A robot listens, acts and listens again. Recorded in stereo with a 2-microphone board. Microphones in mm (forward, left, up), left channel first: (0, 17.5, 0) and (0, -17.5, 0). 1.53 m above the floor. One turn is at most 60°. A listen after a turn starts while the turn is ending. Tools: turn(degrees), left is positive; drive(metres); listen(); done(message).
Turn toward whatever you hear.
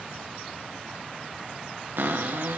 turn(degrees=-60)
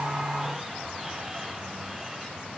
listen()
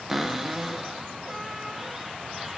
turn(degrees=-10)
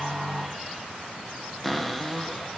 done("Found it: a cupboard door, straight ahead, 1 to 2 m away.")